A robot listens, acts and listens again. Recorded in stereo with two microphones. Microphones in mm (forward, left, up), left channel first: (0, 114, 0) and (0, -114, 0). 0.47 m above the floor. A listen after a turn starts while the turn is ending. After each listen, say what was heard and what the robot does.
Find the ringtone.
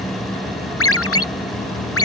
Turn 90° left.
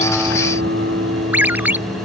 So it is at 10° right. Turn 10° right.
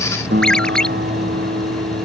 Found it: a ringtone, straight ahead.